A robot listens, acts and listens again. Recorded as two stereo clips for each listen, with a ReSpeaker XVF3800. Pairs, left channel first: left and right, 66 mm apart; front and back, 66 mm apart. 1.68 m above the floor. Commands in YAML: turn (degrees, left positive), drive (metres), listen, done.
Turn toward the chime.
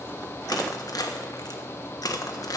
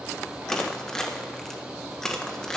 listen: true
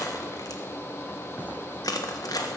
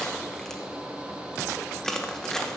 listen: true
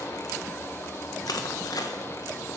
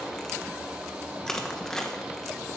done: "I can't make out a chime, only crushing."